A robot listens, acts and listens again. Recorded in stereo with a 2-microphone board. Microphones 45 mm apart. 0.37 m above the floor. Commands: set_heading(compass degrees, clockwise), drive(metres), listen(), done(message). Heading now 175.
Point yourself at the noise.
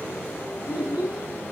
set_heading(205)
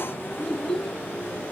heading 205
done("Facing the child speaking, 2 to 4 m away.")